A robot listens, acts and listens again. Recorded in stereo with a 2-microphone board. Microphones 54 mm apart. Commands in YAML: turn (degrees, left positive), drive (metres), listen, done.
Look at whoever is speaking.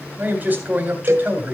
turn: -35
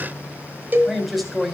done: "Found it: a man speaking, straight ahead."